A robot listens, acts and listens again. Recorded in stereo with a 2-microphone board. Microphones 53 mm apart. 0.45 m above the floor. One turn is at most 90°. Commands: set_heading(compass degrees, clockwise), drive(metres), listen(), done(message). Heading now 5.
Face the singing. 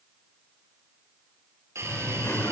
set_heading(315)
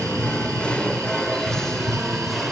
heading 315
done("Found it: singing, straight ahead, 1 to 2 m away.")